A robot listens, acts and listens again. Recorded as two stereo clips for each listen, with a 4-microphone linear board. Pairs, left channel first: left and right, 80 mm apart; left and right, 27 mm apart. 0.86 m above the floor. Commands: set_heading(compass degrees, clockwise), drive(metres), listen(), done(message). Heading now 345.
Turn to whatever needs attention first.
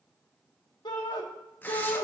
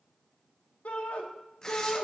set_heading(275)
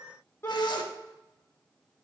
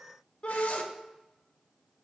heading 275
set_heading(240)
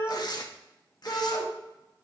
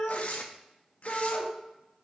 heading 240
set_heading(220)
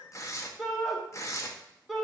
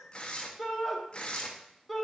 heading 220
done("Found it: a shout, straight ahead.")